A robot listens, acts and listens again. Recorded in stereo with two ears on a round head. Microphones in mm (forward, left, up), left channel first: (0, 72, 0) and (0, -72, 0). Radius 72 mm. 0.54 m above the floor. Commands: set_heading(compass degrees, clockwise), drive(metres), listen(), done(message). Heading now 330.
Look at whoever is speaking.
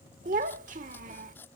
set_heading(20)
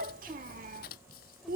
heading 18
set_heading(83)
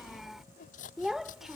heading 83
done("Found it: a child speaking, straight ahead.")